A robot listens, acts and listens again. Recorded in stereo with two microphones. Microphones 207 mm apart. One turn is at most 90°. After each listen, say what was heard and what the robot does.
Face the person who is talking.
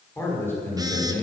Turn 30° left.
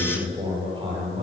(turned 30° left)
So it is at 25° right. Turn 25° right.
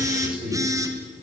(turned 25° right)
Facing the man speaking, over 4 m away.